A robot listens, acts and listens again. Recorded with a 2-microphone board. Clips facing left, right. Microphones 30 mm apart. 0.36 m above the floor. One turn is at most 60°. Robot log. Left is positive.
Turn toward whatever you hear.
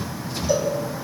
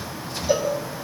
note: The cowbell: about 20° right or 160° right.
cmd yaw -20
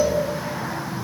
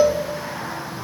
note: So it is at 135° right.
cmd yaw -60
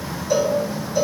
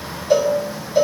note: The cowbell is now 55° right.
cmd yaw -55
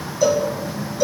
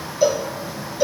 note: The cowbell is now 25° right.
cmd yaw -25
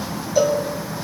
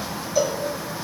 end: Found it: a cowbell, straight ahead, 1 to 2 m away.